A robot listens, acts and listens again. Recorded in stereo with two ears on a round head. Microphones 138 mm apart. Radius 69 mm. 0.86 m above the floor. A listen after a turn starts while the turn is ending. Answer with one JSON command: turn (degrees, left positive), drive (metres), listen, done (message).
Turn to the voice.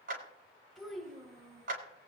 {"turn": 30}
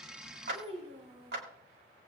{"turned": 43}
{"turn": -40}
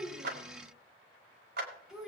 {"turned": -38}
{"done": "Facing the child speaking."}